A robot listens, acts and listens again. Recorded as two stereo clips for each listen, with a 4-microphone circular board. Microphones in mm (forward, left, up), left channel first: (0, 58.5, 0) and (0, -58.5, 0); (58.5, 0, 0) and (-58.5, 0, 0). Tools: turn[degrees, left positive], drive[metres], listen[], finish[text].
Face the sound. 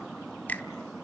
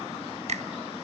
Thought: The finger snap: 165° left.
Action: turn[165]
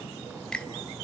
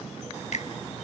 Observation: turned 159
Thought: The finger snap is now 10° left.
Action: turn[10]
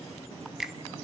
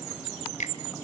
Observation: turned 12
Action: finish[Found it: a finger snap, straight ahead.]